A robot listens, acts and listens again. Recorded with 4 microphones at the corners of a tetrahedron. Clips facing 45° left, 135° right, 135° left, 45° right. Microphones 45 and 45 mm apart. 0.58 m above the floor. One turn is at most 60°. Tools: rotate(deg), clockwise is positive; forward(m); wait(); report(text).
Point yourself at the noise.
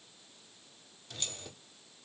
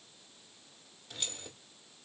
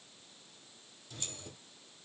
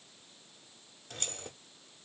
rotate(55)
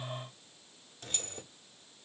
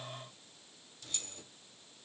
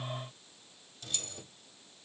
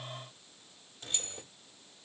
rotate(-10)
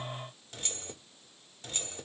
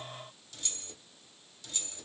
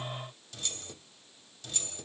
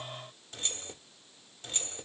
report("Found it: keys jangling, straight ahead, under 1 m away.")